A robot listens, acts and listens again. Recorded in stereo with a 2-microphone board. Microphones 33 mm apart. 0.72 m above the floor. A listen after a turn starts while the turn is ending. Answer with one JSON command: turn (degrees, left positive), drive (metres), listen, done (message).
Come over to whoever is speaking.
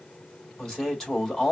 {"turn": 15}
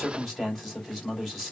{"drive": 1.0}
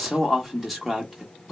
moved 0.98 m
{"drive": 1.0}
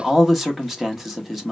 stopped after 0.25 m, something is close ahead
{"done": "Arrived at the man speaking, straight ahead."}